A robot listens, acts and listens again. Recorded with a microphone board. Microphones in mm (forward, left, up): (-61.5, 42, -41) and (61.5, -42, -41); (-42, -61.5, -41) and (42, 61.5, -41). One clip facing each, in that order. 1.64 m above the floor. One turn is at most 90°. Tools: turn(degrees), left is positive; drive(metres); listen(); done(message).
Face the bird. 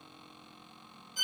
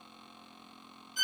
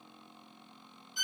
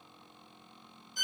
listen()
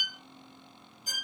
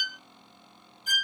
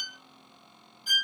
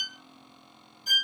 listen()
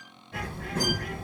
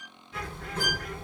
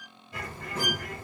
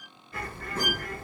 turn(degrees=90)
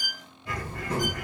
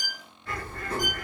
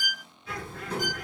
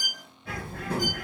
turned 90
turn(degrees=70)
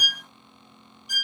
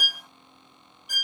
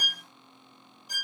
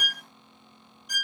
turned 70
listen()
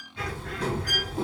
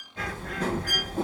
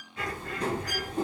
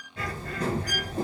done("Facing the bird, 2 to 4 m away.")